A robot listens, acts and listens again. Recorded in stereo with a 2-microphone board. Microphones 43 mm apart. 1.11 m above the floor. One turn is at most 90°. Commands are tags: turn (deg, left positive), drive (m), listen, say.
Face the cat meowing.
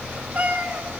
<turn deg="-40"/>
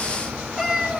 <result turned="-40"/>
<say>Found it: a cat meowing, straight ahead.</say>